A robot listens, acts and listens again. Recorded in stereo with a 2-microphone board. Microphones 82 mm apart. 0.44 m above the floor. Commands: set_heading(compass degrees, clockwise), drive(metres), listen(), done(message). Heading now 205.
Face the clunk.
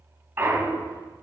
set_heading(235)
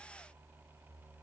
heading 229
listen()
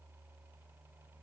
done("I heard a clunk, but can't make it out now. It was about 10° right or 125° right.")